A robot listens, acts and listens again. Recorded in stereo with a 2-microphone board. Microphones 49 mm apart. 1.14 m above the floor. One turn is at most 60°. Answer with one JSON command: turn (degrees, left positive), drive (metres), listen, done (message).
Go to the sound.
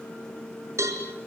{"turn": -60}
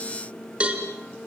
{"turn": -25}
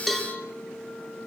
{"drive": 1.0}
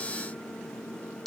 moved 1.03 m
{"drive": 1.0}
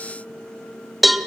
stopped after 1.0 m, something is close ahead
{"done": "Arrived at the cowbell, straight ahead."}